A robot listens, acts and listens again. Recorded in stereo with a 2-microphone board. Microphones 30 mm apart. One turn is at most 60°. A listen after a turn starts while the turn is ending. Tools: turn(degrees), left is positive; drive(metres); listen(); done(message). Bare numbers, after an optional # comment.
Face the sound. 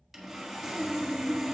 turn(-30)
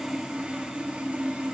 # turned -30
# So it is at 135° right.
turn(-60)
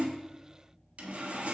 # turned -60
# The sawing is now 75° right.
turn(-60)
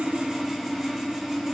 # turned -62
# The sawing is now 15° right.
turn(-15)
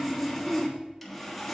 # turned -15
done("Facing the sawing, 1 to 2 m away.")